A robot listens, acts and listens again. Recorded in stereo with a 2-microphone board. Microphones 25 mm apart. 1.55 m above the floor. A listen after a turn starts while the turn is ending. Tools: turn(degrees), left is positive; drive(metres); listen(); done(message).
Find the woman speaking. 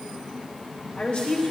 turn(degrees=65)
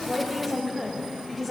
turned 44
turn(degrees=15)
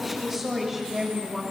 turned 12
done("Facing the woman speaking, 2 to 4 m away.")